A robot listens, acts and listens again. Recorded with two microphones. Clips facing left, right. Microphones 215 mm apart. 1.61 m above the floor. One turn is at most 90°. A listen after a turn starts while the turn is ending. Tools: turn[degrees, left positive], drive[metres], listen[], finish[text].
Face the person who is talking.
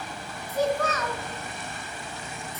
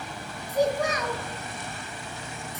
Action: turn[-30]
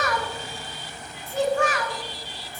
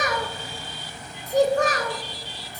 Thought: So it is at 130° right.
Action: turn[-90]
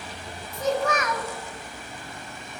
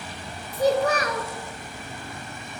Thought: The child speaking is now 40° right.
Action: turn[-40]
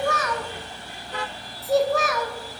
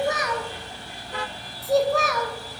Action: finish[Facing the child speaking.]